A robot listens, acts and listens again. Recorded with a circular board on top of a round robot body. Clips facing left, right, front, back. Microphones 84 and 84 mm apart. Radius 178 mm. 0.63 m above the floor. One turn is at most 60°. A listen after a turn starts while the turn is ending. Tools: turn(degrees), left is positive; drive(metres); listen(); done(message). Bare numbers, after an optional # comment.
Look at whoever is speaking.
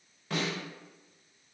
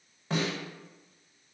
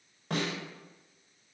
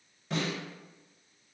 listen()
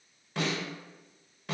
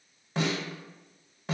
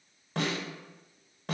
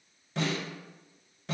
listen()
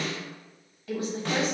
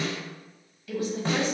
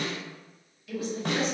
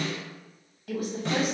# The woman speaking: 140° left.
turn(60)
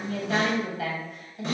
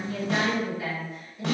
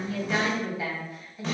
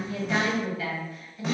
# The woman speaking is now 70° left.
turn(60)
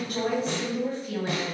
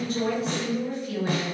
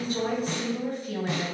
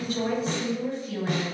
# The woman speaking is now 30° left.
turn(30)
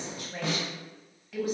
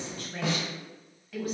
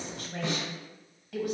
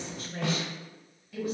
done("Found it: a woman speaking, straight ahead, 1 to 2 m away.")